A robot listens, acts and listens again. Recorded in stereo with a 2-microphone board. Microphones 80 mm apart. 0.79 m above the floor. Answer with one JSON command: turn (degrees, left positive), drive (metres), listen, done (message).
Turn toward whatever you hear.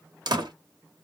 {"turn": -65}
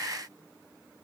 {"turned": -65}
{"listen": true}
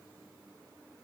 {"done": "I heard a door slam, but can't make it out now. It was about straight ahead or 50° right."}